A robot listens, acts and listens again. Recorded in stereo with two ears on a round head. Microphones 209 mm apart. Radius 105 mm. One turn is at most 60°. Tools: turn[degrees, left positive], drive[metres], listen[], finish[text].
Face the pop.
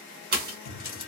Thought: The pop: about 40° right or 140° right.
Action: turn[-40]
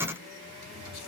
Action: listen[]
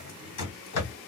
Action: finish[I heard a pop, but can't make it out now. It was about straight ahead or 100° right.]